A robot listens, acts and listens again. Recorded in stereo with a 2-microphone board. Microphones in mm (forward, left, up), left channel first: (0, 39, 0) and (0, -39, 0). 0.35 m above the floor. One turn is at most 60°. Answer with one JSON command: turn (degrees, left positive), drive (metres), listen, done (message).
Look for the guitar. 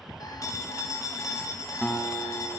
{"turn": 15}
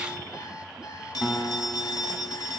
{"done": "Found it: a guitar, straight ahead, 1 to 2 m away."}